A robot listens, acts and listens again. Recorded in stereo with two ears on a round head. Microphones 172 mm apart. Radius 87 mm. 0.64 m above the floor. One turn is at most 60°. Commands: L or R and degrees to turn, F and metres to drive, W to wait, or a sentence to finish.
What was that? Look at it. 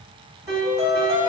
R30
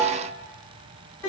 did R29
L15
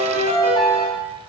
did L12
Found it: a piano, straight ahead, 1 to 2 m away.